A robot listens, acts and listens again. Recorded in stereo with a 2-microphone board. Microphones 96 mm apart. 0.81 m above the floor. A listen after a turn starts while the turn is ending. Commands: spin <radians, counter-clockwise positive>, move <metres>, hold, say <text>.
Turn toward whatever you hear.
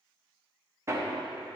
spin -0.52
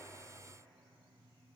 hold
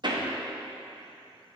spin -2.09
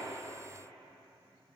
hold
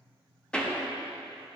spin 0.17
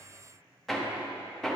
say Facing the hammering, under 1 m away.